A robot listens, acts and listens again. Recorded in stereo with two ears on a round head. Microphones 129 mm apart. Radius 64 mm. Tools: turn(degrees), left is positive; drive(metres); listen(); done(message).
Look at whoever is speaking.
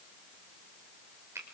listen()
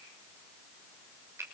listen()
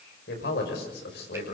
turn(degrees=90)
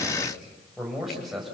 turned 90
done("Found it: a man speaking, straight ahead, over 4 m away.")